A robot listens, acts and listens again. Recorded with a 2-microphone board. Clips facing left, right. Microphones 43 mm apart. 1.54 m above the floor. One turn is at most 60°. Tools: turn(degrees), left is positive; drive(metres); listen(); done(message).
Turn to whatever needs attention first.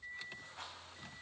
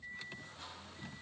listen()
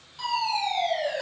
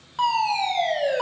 turn(degrees=-60)
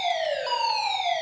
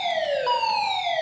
turn(degrees=-20)
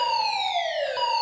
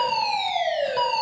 done("Facing the fire alarm.")